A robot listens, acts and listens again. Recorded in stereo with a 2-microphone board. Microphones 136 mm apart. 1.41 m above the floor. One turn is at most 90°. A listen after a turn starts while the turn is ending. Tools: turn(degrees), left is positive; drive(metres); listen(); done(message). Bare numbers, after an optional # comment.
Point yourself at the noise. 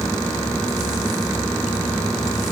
listen()
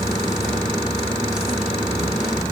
listen()
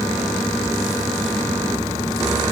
done("I can't make out anything.")